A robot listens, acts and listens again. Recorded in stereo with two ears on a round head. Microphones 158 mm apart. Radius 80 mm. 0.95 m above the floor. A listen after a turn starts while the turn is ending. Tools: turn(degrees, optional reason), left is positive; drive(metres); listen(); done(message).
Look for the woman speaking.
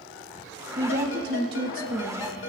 turn(degrees=-50, reason="The woman speaking: about 50° right or 130° right.")
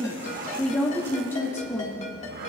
turn(degrees=20, reason="So it is at 20° left.")
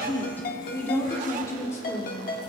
turn(degrees=20, reason="The woman speaking is now 20° left.")
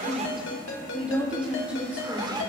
turn(degrees=-10, reason="The woman speaking is now 10° right.")
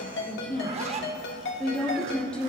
done("Found it: a woman speaking, straight ahead, 2 to 4 m away.")